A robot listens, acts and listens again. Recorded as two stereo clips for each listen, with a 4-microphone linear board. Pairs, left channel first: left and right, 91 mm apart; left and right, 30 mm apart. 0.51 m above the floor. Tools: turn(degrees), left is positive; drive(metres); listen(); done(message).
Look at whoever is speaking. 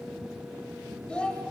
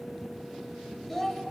turn(degrees=30)
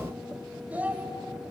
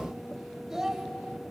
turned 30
turn(degrees=-20)
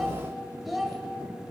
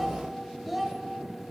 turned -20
done("Found it: a child speaking, straight ahead, 1 to 2 m away.")